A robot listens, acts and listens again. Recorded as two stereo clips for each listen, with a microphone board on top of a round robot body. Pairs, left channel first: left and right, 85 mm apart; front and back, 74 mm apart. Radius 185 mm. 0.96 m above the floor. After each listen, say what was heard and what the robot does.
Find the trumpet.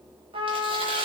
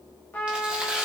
The trumpet: 70° right. Turn 70° right.
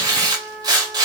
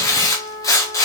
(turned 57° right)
The trumpet is now 15° right. Turn 15° right.
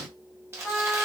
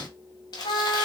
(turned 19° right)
Facing the trumpet.